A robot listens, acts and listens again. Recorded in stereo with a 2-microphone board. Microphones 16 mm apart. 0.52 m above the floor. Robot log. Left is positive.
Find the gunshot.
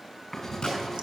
note: The gunshot: about 65° left or 115° left.
cmd yaw +65
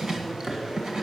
cmd idle
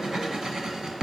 end: I heard a gunshot, but can't make it out now. It was about straight ahead or 50° left.